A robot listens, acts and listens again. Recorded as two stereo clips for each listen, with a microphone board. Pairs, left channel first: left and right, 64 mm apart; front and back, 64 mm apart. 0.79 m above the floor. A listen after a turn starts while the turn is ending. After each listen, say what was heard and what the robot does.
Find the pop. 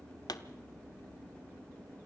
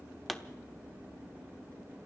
The pop: 90° left. Turn 90° left.
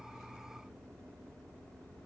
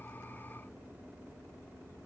Facing where the pop came from. I can't hear it now.